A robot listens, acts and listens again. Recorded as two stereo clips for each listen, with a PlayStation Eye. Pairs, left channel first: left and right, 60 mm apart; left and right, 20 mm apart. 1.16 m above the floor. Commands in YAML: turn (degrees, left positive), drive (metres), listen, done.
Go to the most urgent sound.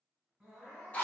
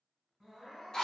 turn: -30
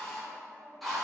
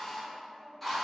listen: true
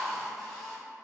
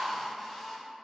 listen: true
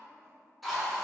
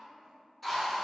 done: "I heard crying, but can't make it out now. It was about 20° left or 140° right. I did not reach it."